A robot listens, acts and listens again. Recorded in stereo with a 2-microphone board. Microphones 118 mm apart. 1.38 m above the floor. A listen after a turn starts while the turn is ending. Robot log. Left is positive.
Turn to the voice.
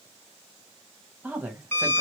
cmd yaw -30
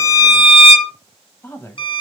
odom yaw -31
note: So it is at 20° left.
cmd yaw +20
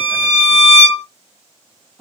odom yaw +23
end: Found it: a woman speaking, straight ahead.